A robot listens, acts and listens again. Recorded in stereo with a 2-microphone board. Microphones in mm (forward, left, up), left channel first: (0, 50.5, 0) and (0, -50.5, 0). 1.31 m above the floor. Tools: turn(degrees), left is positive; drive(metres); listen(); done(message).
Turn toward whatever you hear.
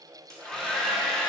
turn(degrees=30)
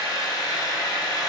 turn(degrees=140)
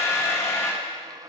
turn(degrees=25)
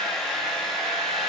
done("Found it: a hair dryer, straight ahead, 1 to 2 m away.")